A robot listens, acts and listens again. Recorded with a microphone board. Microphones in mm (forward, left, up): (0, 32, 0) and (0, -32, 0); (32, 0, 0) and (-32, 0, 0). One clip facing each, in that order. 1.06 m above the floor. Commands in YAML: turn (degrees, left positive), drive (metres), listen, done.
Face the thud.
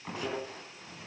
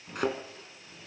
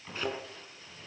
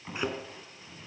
turn: -105
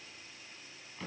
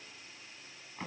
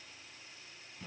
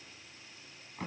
done: "I heard a thud from this way, but can't make it out now."